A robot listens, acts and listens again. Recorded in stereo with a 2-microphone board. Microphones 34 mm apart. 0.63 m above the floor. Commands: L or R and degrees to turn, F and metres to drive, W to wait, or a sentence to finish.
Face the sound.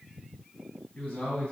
L40
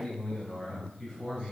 L10
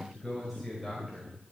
Facing the man speaking.